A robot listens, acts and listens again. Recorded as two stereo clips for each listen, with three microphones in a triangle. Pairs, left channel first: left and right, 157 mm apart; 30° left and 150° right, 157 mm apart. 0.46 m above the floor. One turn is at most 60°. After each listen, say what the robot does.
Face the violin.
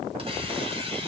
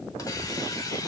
Keep listening.
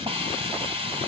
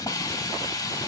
Keep listening.
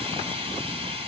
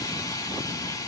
I can't make out a violin, only a hiss.